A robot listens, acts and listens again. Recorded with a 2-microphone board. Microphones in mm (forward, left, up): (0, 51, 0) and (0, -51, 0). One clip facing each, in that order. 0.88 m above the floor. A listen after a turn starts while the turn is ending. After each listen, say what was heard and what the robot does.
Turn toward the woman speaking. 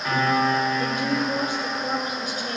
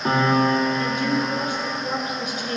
The woman speaking: about 40° left or 140° left. Turn 40° left.
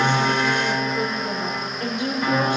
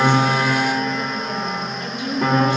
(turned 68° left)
So it is at 60° left. Turn 60° left.
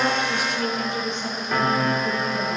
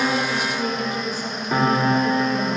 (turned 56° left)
The woman speaking is now 10° right. Turn 10° right.
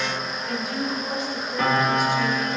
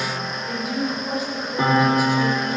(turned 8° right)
Found it: a woman speaking, straight ahead.